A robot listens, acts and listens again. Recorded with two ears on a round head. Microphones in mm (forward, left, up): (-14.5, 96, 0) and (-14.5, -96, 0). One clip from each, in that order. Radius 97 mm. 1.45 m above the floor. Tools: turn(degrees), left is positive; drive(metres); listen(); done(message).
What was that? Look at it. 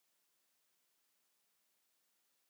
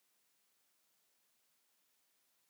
listen()
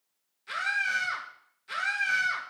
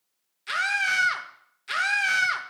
turn(degrees=-55)
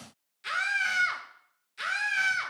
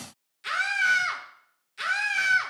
done("Found it: a scream, straight ahead, 1 to 2 m away.")